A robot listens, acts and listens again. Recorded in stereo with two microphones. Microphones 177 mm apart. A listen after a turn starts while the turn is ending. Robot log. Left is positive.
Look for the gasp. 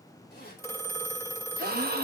note: The gasp: about 60° right or 120° right.
cmd yaw -60
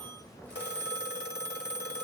cmd idle
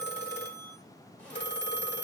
end: I heard a gasp, but can't make it out now. It was about straight ahead or 60° right.